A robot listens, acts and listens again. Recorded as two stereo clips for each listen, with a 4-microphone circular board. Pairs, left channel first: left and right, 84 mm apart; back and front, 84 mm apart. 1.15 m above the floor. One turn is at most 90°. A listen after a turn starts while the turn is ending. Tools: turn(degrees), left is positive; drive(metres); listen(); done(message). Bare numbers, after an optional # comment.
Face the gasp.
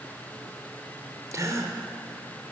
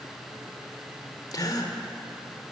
# The gasp: 140° right.
turn(-90)
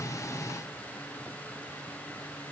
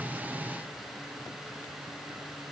# Nothing new. It was at 50° right.
turn(-50)
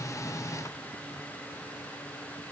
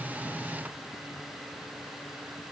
done("Facing where the gasp came from. I can't hear it now.")